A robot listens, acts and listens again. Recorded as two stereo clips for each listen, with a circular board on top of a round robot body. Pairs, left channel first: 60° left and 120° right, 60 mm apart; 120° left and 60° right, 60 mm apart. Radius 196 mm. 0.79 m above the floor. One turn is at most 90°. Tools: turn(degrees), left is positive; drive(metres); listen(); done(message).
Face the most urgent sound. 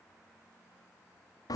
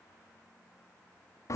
listen()
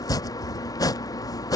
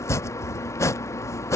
listen()
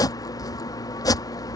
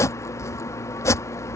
done("I can't make out anything urgent to turn to.")